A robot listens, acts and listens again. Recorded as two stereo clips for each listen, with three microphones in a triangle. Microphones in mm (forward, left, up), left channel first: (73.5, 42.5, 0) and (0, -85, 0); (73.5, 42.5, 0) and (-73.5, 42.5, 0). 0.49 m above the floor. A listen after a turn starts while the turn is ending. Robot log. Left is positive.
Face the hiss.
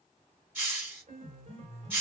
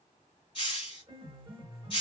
note: The hiss: 45° right.
cmd yaw -45
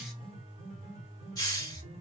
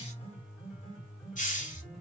end: Found it: a hiss, straight ahead, 1 to 2 m away.